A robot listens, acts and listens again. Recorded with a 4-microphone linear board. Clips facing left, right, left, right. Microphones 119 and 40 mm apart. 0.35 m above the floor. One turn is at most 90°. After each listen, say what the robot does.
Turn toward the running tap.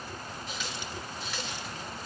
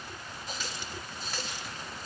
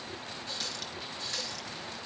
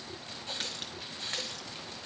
Turn 40° right.
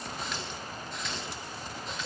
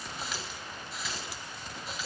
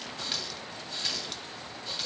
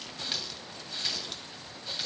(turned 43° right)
Found it: a running tap, straight ahead.